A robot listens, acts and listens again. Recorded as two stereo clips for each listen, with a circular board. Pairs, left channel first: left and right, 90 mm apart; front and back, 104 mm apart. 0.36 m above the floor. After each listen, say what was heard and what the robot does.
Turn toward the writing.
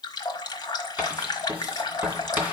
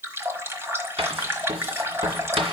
The writing: 165° right. Turn 165° right.
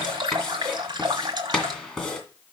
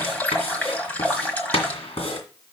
Facing the writing.